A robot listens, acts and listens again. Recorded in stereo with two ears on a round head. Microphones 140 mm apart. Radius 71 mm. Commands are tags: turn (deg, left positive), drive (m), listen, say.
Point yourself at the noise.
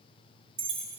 <turn deg="-60"/>
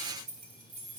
<turn deg="-55"/>
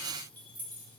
<turn deg="-10"/>
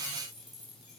<say>Facing the keys jangling, over 4 m away.</say>